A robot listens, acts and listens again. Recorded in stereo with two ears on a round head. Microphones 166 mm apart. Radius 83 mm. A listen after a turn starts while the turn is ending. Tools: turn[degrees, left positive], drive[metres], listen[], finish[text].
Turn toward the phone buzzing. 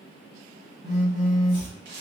Thought: The phone buzzing: about 25° right or 155° right.
Action: turn[-25]
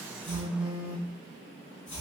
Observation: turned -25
Action: finish[Facing the phone buzzing.]